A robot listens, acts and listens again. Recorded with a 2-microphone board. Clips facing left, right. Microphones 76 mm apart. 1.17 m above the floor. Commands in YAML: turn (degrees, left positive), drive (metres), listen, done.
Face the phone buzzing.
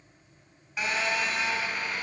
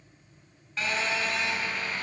turn: 30
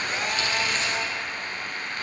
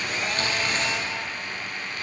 turn: 140
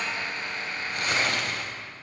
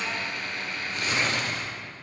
turn: 30
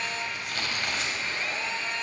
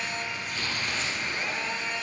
turn: -10
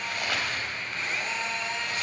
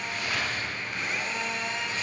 done: "Found it: a phone buzzing, straight ahead, 2 to 4 m away."